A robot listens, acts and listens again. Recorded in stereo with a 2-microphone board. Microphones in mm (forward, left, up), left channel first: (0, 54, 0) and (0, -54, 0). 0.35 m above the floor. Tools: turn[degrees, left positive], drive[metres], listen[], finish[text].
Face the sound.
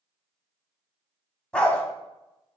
Action: turn[30]
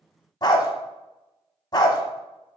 Thought: So it is at 140° left.
Action: turn[140]
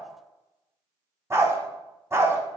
Thought: The dog barking is now 25° right.
Action: turn[-25]
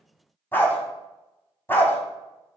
Thought: The dog barking is now 20° left.
Action: turn[20]
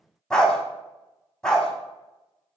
Thought: The dog barking is now 10° left.
Action: turn[10]
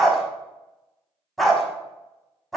Action: finish[Found it: a dog barking, straight ahead, 1 to 2 m away.]